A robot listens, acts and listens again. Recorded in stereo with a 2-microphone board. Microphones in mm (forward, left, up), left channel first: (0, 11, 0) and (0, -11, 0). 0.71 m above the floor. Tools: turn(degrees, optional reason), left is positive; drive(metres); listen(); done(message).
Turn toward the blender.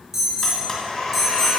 turn(degrees=25, reason="The blender: about 25° left or 155° left.")
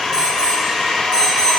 done("Facing the blender, 1 to 2 m away.")